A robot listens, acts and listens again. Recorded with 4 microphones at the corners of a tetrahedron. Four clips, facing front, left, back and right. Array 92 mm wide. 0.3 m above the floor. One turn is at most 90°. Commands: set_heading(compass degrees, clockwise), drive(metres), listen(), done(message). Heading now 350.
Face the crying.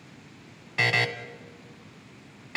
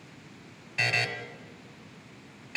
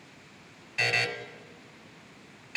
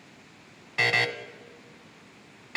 listen()
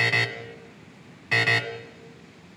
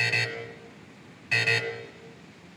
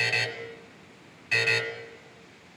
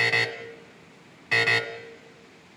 listen()
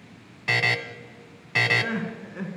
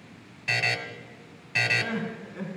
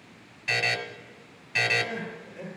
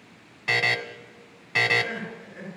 set_heading(335)
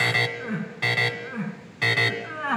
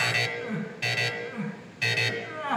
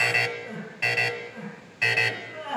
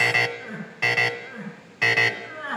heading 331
done("Found it: crying, straight ahead.")